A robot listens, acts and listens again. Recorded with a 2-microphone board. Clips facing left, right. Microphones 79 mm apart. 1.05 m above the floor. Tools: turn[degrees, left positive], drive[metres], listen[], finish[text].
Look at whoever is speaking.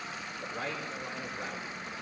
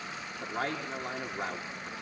Thought: The man speaking: about 65° right or 115° right.
Action: turn[-65]
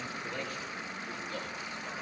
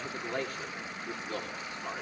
Thought: So it is at 45° right.
Action: turn[-45]
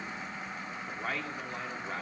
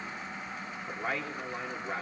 Action: finish[Facing the man speaking.]